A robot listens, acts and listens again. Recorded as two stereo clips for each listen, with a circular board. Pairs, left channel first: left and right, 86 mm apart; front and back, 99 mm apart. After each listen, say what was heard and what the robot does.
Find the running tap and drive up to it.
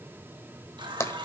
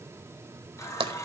The running tap: 60° right. Turn 60° right.
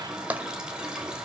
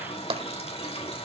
The running tap is now 10° right. Turn 10° right.
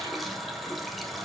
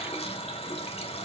Drive 1.0 m forward.
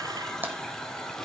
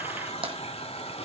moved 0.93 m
Drive 1.0 m forward.
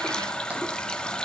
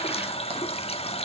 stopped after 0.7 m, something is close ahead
The running tap is now 10° left. Turn 10° left.
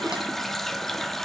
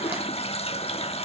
Arrived at the running tap, straight ahead.